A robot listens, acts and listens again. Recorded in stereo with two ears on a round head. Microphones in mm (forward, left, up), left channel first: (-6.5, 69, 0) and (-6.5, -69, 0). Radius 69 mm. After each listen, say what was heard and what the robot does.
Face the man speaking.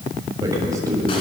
The man speaking: about 20° right or 160° right. Turn 20° right.
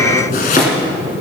The man speaking: about 35° right or 145° right. Turn 35° right.
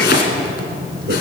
So it is at 115° right. Turn 115° right.
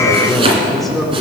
Facing the man speaking, 2 to 4 m away.